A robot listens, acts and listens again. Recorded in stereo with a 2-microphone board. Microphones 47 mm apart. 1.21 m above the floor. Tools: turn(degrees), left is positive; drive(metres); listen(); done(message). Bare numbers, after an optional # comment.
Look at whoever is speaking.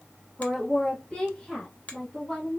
# The woman speaking: about 15° left or 165° left.
turn(15)
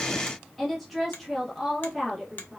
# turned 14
done("Facing the woman speaking.")